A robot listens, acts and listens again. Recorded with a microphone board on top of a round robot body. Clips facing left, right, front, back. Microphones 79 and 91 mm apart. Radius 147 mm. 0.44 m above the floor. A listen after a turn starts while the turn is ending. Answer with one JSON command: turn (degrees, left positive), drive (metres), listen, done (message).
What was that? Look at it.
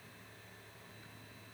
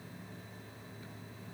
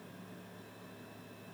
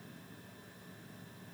{"listen": true}
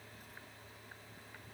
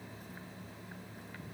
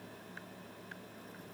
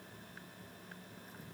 {"listen": true}
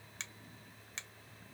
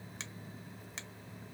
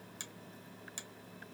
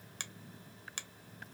{"turn": -175}
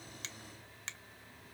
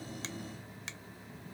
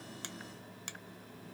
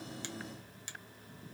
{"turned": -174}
{"done": "Found it: a finger snap, straight ahead."}